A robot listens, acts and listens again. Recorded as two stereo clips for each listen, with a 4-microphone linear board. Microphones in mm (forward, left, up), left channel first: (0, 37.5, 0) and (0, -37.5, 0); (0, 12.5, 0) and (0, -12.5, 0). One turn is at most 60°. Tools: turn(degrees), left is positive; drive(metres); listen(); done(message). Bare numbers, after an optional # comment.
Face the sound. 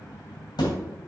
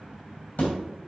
# The thud: about 65° left or 115° left.
turn(60)
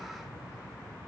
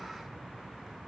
listen()
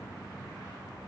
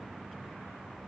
done("I heard a thud, but can't make it out now. It was about 5° left or 55° left.")